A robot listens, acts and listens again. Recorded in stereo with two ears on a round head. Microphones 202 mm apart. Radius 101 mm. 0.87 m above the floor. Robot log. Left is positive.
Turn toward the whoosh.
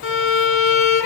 cmd idle
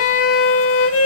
cmd idle
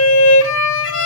end: I can't make out a whoosh to turn to.